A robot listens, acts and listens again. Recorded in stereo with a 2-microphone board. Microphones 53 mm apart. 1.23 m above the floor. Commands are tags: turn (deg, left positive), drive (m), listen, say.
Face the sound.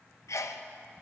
<turn deg="90"/>
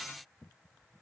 <say>Facing where the sneeze came from. I can't hear it now.</say>